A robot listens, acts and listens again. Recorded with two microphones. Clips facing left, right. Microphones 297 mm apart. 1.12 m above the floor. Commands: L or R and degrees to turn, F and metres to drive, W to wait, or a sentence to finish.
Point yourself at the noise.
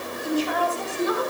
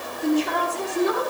R90
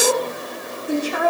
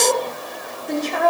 L10
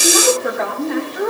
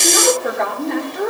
Facing the woman speaking, 2 to 4 m away.